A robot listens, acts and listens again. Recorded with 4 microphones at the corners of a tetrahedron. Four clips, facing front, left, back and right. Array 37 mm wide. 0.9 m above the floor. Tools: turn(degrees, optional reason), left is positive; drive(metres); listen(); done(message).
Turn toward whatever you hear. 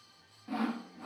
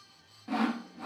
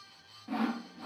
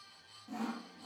turn(degrees=95, reason="The sawing: 95° left.")
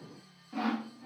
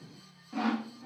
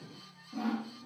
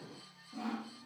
turn(degrees=55, reason="The sawing is now 55° left.")
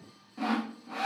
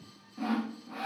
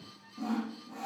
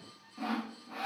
done("Facing the sawing, under 1 m away.")